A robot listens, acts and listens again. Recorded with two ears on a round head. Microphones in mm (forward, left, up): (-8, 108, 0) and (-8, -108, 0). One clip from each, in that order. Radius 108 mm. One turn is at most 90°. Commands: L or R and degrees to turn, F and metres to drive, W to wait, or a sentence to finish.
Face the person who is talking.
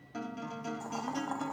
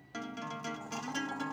W
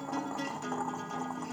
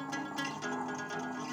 W
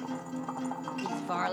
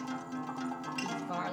L40
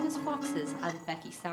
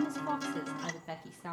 L35
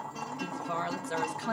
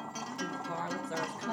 L20
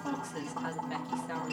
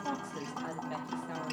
L10
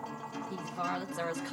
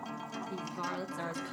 Found it: a woman speaking, straight ahead, 1 to 2 m away.